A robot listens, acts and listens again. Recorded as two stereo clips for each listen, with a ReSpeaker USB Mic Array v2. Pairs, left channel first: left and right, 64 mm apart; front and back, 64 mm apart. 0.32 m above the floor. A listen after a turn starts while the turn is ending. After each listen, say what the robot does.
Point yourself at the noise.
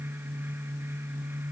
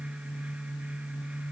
Keep listening.
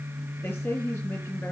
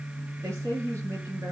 Turn 140° left.
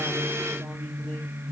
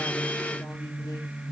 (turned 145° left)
Keep listening.
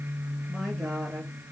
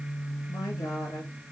Keep listening.
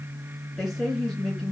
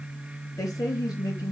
Facing the woman speaking.